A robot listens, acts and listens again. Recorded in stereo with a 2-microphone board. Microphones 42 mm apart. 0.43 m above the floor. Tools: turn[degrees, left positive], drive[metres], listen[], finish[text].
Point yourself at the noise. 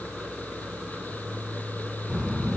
Action: turn[-30]
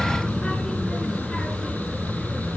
Thought: So it is at 10° left.
Action: turn[10]
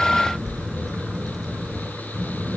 Action: finish[Found it: a child speaking, straight ahead, over 4 m away.]